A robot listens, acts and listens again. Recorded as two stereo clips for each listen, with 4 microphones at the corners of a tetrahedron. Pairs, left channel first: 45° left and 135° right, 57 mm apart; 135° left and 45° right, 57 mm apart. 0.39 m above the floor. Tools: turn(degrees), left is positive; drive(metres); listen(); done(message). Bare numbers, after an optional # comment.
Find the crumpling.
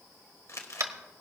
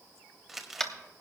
# The crumpling: 40° left.
turn(40)
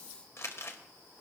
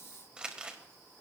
# The crumpling is now 25° left.
turn(25)
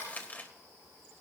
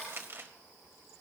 # The crumpling is now 10° right.
turn(-10)
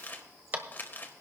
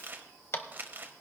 done("Facing the crumpling.")